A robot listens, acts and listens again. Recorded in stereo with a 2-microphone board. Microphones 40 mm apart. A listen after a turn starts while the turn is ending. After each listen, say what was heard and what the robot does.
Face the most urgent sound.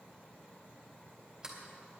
Keep listening.
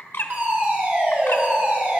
The fire alarm: about 50° right or 130° right. Turn 50° right.
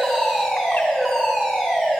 So it is at 10° right. Turn 10° right.
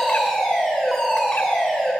Found it: a fire alarm, straight ahead.